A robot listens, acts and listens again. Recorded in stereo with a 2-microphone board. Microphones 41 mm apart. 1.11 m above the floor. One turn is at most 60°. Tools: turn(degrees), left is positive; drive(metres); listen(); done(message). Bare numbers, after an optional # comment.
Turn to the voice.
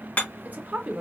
# The woman speaking: about 40° right or 140° right.
turn(-40)
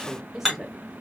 done("Facing the woman speaking.")